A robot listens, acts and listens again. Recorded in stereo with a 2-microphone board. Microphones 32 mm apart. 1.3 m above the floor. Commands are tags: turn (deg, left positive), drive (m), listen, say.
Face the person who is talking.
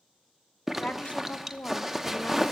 <turn deg="55"/>
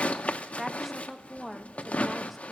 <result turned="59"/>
<say>Found it: a woman speaking, straight ahead, 1 to 2 m away.</say>